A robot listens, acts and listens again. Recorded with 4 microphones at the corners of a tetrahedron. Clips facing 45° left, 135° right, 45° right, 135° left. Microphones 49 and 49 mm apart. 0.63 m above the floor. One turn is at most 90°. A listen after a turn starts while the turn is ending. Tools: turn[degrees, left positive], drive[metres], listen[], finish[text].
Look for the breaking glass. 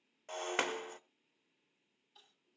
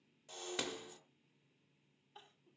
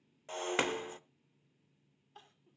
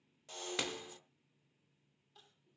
Thought: The breaking glass: 10° left.
Action: turn[10]
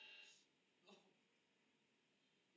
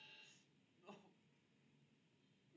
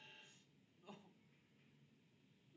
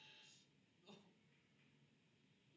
Action: finish[Facing where the breaking glass came from. I can't hear it now.]